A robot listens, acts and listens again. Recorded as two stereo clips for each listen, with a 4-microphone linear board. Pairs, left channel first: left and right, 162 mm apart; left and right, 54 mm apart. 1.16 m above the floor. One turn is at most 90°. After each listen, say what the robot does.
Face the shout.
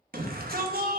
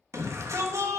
Turn 65° right.
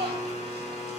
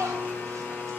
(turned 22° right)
Turn 90° right.
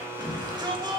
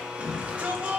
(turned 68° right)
Turn 25° right.
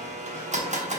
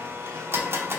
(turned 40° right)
Turn 15° left.
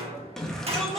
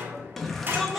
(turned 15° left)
Facing the shout, 1 to 2 m away.